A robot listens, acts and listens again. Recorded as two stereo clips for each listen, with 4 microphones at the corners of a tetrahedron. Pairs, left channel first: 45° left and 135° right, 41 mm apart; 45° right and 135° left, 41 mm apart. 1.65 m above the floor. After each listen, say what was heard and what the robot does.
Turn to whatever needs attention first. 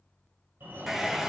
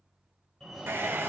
The fire alarm: 130° right. Turn 130° right.
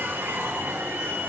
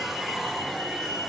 The fire alarm is now 50° right. Turn 50° right.
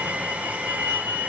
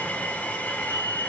Facing the fire alarm, 2 to 4 m away.